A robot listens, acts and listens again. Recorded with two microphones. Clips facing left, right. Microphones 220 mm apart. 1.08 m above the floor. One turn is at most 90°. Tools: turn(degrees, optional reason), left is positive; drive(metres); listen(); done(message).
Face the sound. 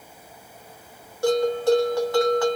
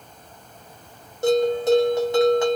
turn(degrees=-20, reason="The bell: about 20° right or 160° right.")
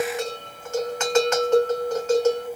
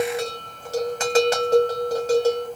turn(degrees=-90, reason="So it is at 140° right.")
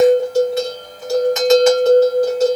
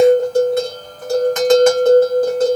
turn(degrees=-60, reason="The bell is now 60° right.")
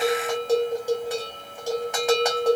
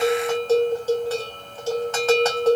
turn(degrees=15, reason="The bell is now 15° left.")
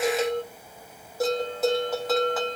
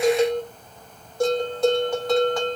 done("Found it: a bell, straight ahead.")